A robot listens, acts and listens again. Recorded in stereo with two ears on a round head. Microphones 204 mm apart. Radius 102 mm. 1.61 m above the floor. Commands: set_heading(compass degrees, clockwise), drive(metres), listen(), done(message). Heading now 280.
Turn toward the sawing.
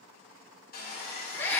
set_heading(240)
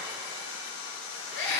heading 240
set_heading(145)
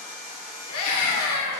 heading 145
set_heading(105)
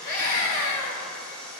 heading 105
done("Found it: sawing, straight ahead, 1 to 2 m away.")